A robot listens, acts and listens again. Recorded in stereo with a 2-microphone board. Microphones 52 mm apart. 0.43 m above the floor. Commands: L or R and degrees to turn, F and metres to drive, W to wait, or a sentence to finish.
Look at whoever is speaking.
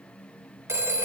W
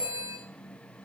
W
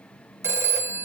I can't make out anyone speaking to turn to.